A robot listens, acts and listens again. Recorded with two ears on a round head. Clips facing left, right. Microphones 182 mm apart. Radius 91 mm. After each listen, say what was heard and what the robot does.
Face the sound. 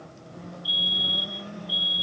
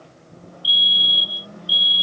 The fire alarm: about 40° right or 140° right. Turn 40° right.
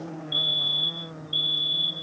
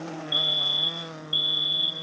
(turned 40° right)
So it is at 10° right. Turn 10° right.
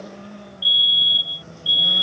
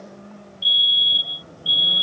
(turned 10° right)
Found it: a fire alarm, straight ahead.